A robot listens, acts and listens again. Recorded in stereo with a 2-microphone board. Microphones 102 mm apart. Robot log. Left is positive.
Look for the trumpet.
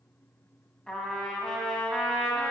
cmd yaw +30
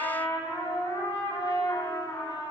note: So it is at 140° left.
cmd yaw +140
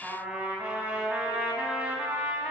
note: The trumpet is now 15° right.
cmd yaw -15
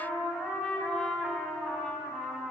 end: Found it: a trumpet, straight ahead, 1 to 2 m away.